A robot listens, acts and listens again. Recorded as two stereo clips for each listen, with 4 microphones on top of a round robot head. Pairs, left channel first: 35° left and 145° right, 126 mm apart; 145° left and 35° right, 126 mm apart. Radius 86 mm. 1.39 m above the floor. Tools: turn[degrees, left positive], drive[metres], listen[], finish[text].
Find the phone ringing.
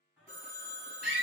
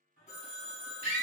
Thought: The phone ringing: 175° right.
Action: turn[-175]
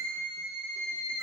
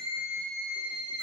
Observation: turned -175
Action: listen[]
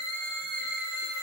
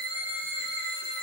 Action: listen[]
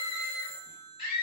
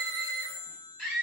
Thought: The phone ringing is now 65° right.
Action: turn[-65]
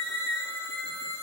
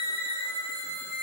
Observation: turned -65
Action: listen[]
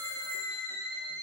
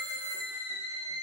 Action: listen[]
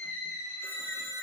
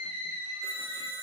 Action: finish[Facing where the phone ringing came from. I can't hear it now.]